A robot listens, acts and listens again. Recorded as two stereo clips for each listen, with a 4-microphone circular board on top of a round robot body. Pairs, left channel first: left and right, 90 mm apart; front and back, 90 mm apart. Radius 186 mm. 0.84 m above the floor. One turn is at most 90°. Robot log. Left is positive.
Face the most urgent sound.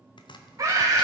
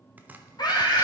note: The scream: 40° right.
cmd yaw -40
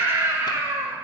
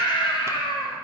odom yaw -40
note: The scream is now 25° right.
cmd yaw -25
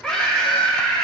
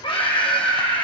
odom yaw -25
note: The scream is now 10° left.
cmd yaw +10
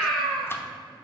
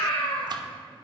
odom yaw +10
end: Found it: a scream, straight ahead, 2 to 4 m away.